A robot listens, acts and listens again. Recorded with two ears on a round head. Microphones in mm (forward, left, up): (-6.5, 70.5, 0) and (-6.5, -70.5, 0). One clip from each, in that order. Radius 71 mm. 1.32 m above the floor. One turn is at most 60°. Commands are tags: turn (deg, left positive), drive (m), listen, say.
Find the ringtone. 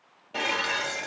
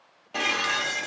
<listen/>
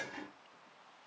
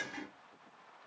<listen/>
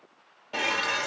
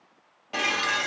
<say>I can't make out a ringtone, only dishes clattering.</say>